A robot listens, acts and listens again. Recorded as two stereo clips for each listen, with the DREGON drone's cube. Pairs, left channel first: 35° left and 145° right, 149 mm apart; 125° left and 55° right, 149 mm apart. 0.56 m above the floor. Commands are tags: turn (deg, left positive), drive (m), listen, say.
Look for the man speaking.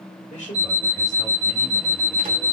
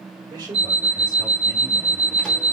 <say>Facing the man speaking, 1 to 2 m away.</say>